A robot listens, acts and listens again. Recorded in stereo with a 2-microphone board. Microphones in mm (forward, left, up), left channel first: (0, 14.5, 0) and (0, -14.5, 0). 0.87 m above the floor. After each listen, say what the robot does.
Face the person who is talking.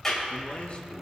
Turn 40° left.
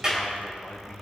Turn 95° left.
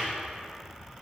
Keep listening.
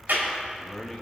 Turn 20° left.
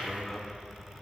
Found it: a man speaking, straight ahead.